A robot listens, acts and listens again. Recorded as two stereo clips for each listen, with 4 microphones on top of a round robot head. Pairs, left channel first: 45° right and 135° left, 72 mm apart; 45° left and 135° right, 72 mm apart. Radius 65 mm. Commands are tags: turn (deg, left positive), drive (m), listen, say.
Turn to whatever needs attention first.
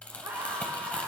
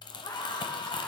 <turn deg="65"/>
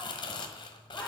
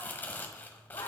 <turn deg="10"/>
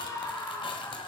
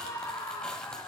<say>Found it: a scream, straight ahead, 2 to 4 m away.</say>